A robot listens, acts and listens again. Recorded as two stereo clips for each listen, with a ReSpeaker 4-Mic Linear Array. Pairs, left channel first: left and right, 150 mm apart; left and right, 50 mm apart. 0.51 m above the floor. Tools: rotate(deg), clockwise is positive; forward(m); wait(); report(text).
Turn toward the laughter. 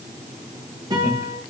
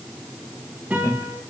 rotate(-65)
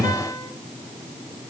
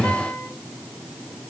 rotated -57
rotate(-65)
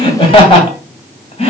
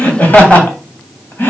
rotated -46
rotate(-45)
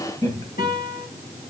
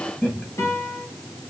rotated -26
rotate(-25)
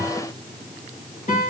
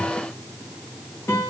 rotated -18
rotate(-10)
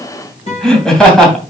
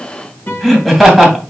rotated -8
report("Facing the laughter.")